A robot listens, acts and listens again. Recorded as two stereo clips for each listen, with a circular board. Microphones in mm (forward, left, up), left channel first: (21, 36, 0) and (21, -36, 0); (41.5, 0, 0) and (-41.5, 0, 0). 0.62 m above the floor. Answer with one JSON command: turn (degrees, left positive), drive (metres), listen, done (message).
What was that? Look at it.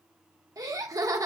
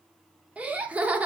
{"turn": -110}
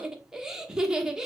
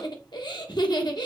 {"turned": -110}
{"turn": -10}
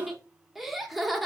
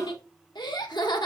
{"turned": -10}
{"done": "Facing the laughter."}